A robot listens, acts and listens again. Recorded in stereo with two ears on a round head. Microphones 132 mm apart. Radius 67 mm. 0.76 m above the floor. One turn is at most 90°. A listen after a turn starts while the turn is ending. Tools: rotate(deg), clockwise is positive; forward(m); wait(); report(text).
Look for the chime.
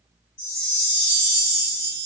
rotate(-60)
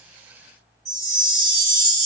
report("Found it: a chime, straight ahead.")